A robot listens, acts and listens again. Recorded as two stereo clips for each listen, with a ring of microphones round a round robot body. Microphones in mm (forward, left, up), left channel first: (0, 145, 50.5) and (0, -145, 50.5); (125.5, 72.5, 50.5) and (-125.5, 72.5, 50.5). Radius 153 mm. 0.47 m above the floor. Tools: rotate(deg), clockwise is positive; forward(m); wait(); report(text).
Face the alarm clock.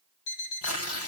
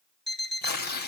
rotate(-90)
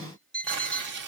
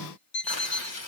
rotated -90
report("Facing the alarm clock, over 4 m away.")